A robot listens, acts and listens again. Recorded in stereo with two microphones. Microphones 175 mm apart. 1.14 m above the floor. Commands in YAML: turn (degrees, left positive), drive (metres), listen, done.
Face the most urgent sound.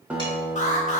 turn: 40
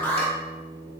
turn: 10
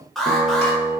done: "Facing the alarm, 1 to 2 m away."